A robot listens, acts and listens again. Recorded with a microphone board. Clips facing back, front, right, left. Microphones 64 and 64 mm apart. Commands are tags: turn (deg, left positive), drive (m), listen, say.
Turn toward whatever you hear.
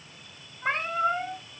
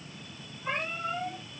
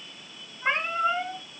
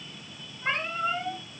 <turn deg="-155"/>
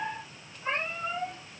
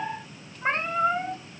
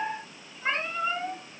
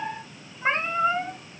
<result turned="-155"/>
<turn deg="30"/>
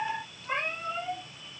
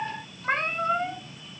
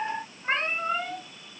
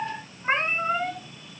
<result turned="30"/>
<turn deg="15"/>
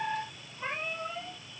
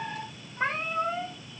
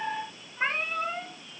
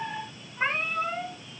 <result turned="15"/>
<say>Found it: a cat meowing, straight ahead, 2 to 4 m away.</say>